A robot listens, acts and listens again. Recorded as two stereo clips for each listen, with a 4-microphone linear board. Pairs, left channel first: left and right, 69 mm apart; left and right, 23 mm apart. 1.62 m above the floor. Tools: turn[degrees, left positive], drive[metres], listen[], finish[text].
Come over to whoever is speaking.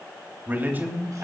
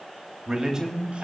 Thought: The man speaking: about 30° right or 150° right.
Action: turn[-30]
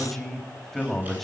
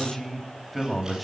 Action: drive[1.0]
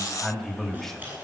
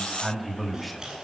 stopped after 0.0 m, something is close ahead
Action: finish[Something is in my way. I am facing the man speaking but have not reached it.]